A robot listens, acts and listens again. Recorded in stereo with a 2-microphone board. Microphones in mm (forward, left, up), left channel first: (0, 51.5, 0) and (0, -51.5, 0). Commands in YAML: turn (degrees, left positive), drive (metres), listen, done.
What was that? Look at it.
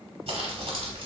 turn: -70
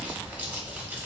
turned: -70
turn: -15
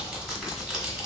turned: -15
done: "Facing the crumpling."